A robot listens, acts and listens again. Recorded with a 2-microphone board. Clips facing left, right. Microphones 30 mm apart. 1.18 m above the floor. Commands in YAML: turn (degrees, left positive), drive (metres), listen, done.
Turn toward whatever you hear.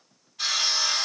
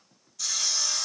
turn: 45
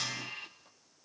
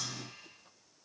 listen: true
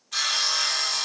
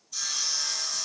turn: 85
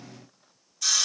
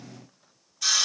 turn: -15
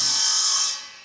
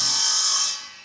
done: "Found it: sawing, straight ahead."